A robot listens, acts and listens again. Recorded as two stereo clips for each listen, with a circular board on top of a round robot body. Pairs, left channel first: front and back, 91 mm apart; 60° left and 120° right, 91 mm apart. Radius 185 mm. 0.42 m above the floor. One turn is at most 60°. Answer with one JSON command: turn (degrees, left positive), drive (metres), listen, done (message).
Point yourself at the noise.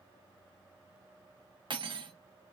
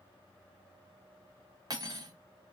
{"turn": -60}
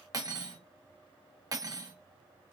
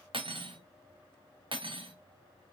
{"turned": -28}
{"turn": -60}
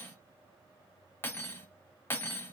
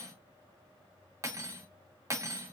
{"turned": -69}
{"turn": -60}
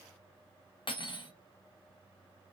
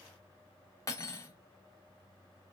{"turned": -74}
{"done": "Found it: cutlery clinking, straight ahead, 1 to 2 m away."}